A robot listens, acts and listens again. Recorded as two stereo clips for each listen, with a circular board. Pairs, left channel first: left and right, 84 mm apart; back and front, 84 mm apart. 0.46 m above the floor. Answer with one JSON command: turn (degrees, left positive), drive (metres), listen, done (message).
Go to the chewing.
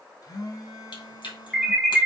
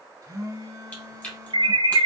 {"turn": 105}
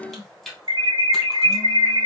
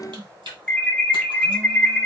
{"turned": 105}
{"drive": 1.0}
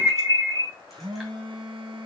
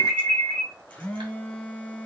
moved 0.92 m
{"listen": true}
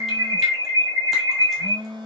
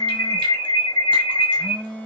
{"listen": true}
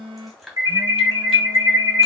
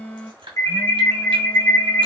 {"drive": 1.0}
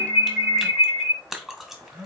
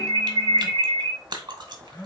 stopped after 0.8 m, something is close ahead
{"done": "Arrived at the chewing, straight ahead."}